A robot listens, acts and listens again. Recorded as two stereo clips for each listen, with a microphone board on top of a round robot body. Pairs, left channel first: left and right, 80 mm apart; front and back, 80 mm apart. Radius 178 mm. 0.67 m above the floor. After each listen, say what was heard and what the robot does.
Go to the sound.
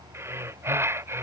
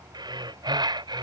The breathing: 150° right. Turn 150° right.
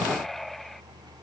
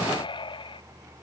Drive 1.0 m forward.
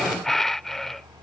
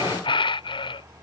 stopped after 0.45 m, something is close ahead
Something is in my way. I am facing the breathing but have not reached it.